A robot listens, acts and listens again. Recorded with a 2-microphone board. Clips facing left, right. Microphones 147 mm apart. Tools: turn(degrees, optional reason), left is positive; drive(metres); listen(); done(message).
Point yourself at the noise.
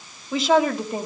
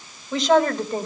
turn(degrees=30)
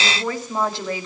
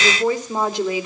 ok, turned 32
turn(degrees=-15, reason="So it is at 15° right.")
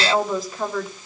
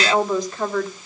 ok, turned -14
done("Found it: a woman speaking, straight ahead.")